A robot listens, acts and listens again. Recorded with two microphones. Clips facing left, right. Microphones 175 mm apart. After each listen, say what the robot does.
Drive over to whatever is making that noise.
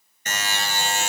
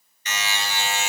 Turn 45° left.
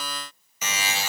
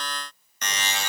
Drive 1.0 m forward.
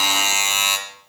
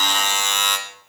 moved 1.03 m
Turn 10° left.
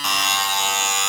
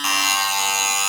Drive 1.0 m forward.
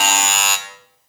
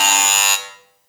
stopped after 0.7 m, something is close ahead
I am next to the buzzer.